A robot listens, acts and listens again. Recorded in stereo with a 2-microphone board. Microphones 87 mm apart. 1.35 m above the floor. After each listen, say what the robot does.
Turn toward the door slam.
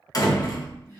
Turn 45° left.
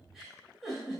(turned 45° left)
Keep listening.
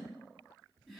I heard a door slam, but can't make it out now. It was about straight ahead or 90° left.